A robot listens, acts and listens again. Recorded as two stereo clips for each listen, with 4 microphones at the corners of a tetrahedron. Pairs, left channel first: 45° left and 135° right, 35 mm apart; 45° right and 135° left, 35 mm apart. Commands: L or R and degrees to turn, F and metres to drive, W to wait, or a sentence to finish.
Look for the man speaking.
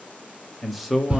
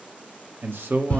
L140
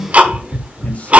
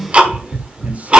W
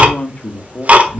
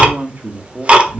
L105
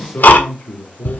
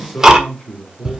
Found it: a man speaking, straight ahead, 2 to 4 m away.